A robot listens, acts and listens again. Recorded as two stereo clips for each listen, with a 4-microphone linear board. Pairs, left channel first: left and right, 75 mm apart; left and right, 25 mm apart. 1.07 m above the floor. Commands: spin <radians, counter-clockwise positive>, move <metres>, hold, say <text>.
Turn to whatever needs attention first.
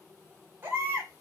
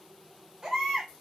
spin -0.52
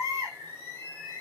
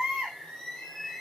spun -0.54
spin -1.92
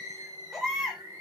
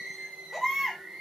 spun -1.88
say Found it: a baby crying, straight ahead.